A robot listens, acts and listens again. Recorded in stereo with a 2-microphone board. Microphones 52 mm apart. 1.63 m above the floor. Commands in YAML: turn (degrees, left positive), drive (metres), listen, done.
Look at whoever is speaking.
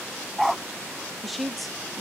turn: 30
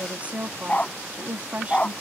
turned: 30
turn: -30
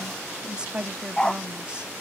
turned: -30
turn: -20
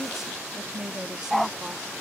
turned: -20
turn: -10
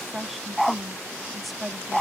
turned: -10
done: "Found it: a woman speaking, straight ahead."